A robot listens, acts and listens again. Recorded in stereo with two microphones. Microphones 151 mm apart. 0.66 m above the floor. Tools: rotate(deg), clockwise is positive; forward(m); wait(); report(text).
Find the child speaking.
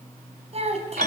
rotate(45)
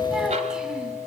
wait()
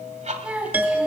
rotate(10)
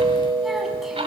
wait()
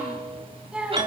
report("Facing the child speaking.")